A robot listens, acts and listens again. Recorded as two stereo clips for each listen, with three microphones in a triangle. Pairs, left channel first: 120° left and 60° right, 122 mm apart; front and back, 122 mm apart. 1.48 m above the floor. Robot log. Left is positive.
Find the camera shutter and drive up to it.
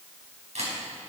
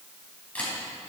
note: The camera shutter: 80° right.
cmd yaw -80
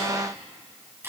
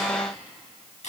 note: The camera shutter is now 10° left.
cmd yaw +10
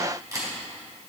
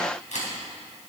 cmd fwd 1.0
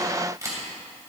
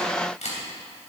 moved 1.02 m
cmd fwd 1.0
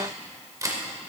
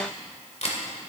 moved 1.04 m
cmd fwd 1.0
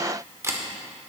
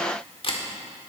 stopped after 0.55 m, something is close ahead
end: Arrived at the camera shutter, straight ahead.